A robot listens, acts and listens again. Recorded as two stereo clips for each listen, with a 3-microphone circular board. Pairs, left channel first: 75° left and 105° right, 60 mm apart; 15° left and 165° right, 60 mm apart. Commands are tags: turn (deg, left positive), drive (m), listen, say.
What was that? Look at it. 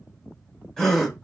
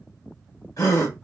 <turn deg="-10"/>
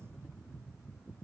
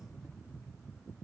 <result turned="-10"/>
<say>I heard a gasp from this way, but can't make it out now.</say>